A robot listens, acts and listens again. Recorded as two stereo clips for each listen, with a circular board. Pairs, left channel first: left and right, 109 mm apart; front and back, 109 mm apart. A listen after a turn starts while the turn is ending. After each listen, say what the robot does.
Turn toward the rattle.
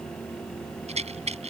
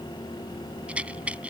Turn 100° right.
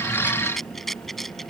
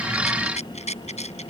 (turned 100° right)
Facing the rattle.